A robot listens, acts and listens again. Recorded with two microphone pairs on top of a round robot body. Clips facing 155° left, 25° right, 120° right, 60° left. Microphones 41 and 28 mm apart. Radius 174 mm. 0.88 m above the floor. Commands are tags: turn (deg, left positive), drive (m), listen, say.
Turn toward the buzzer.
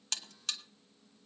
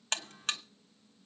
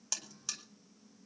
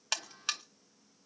<turn deg="20"/>
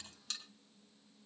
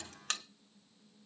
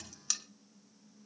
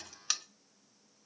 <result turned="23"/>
<say>Facing the buzzer.</say>